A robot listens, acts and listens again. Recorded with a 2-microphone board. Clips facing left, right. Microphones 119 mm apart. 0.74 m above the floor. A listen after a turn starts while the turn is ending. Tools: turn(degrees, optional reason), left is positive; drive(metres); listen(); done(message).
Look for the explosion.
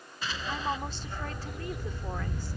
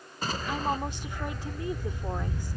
turn(degrees=-40, reason="The explosion: about 40° right or 140° right.")
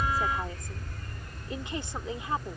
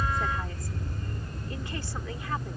listen()
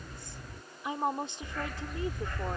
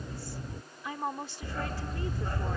done("I heard an explosion, but can't make it out now. It was about straight ahead or 100° right.")